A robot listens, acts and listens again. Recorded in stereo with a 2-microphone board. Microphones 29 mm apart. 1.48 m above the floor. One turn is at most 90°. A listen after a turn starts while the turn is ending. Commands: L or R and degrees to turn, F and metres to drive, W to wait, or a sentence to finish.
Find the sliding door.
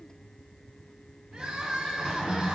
L30
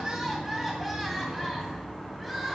Found it: a sliding door, straight ahead.